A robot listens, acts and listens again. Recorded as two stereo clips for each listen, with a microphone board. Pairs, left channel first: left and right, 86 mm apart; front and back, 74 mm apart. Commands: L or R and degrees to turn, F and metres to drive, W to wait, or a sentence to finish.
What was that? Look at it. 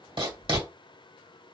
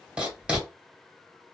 R105
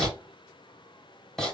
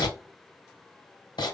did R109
Facing the writing, 2 to 4 m away.